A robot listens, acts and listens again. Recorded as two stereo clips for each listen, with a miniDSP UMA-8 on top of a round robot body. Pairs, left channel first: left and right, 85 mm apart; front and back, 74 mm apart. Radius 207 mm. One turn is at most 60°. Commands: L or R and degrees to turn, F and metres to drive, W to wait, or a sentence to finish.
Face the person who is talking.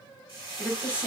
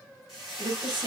R60
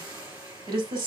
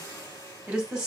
R60
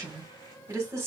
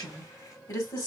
R30
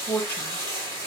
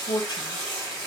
L15
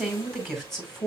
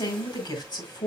Facing the woman speaking.